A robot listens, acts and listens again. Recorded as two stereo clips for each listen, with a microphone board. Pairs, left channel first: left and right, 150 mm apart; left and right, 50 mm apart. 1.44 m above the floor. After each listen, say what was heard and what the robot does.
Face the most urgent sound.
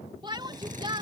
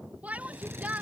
The shout: about 30° right or 150° right. Turn 30° right.
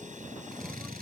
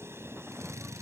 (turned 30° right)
Keep listening.
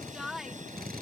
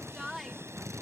Facing the shout.